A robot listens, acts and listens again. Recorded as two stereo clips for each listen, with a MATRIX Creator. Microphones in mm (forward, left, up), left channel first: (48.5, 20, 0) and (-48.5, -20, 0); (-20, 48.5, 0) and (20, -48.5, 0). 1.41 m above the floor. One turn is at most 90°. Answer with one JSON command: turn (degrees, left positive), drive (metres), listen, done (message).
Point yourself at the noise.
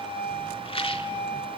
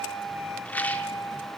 {"turn": 40}
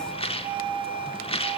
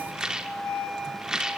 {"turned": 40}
{"turn": 15}
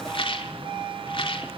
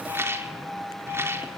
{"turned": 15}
{"done": "Facing the rattle."}